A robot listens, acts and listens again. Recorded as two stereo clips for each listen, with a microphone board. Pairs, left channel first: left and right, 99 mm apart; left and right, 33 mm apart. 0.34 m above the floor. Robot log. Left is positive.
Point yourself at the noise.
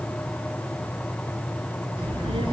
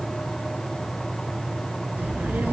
note: The child speaking: about 65° right or 115° right.
cmd yaw -65
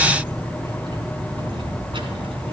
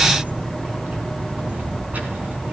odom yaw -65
note: So it is at 65° right.
cmd yaw -65
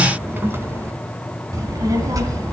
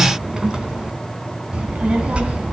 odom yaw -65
note: The child speaking is now 35° right.
cmd yaw -35
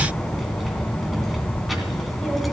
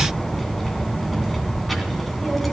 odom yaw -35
end: Found it: a child speaking, straight ahead, 2 to 4 m away.